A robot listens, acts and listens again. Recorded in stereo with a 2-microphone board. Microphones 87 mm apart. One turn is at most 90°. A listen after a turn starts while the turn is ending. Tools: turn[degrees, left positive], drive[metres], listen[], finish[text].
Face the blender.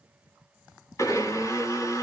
Thought: The blender: about 40° left or 140° left.
Action: turn[40]
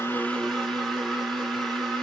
Action: finish[Facing the blender.]